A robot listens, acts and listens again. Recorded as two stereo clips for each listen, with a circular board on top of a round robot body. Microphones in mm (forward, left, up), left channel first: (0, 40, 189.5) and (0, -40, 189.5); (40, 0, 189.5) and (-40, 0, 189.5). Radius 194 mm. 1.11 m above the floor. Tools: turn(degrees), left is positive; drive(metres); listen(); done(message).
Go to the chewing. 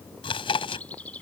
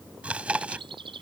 turn(degrees=105)
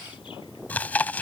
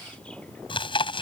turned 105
turn(degrees=15)
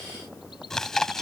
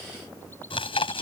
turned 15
drive(metres=1.0)
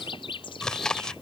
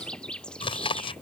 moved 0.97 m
drive(metres=1.0)
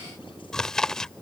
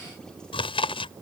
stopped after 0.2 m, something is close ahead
done("Arrived at the chewing, straight ahead.")